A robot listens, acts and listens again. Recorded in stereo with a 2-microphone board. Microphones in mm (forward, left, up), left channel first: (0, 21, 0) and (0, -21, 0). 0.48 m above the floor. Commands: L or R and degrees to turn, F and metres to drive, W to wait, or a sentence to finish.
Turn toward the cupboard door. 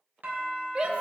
W
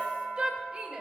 W
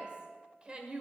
I can't make out a cupboard door, only a shout and a doorbell.